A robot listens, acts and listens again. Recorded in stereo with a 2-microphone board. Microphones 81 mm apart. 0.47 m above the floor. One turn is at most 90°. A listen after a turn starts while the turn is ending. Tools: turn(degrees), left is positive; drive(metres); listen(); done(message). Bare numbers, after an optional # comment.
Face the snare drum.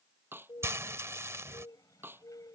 # The snare drum: about 25° right or 155° right.
turn(-25)
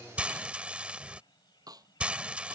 # So it is at 130° right.
turn(-90)
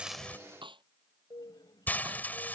# The snare drum is now 90° right.
turn(-90)
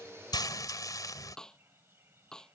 done("Facing the snare drum.")